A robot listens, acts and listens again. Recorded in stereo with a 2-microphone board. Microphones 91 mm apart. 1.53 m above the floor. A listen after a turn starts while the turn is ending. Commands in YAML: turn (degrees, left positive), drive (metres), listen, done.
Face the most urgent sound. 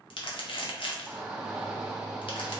turn: -30
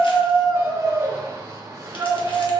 turn: -145
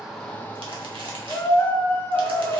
turn: 25
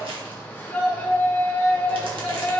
turn: 15
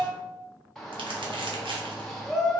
done: "Facing the shout."